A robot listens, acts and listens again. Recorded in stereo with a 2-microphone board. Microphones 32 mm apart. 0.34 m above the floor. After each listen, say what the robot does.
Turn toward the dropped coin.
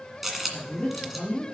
Turn 30° right.
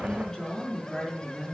Keep listening.
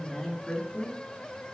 I heard a dropped coin, but can't make it out now. It was about 25° left or 145° right.